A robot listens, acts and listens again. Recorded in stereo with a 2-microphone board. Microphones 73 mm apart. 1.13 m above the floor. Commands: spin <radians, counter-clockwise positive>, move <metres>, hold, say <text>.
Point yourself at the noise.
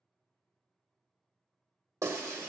spin -0.79
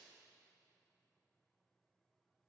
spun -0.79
hold
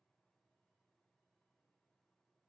say I heard breaking glass, but can't make it out now. It was about straight ahead or 90° right.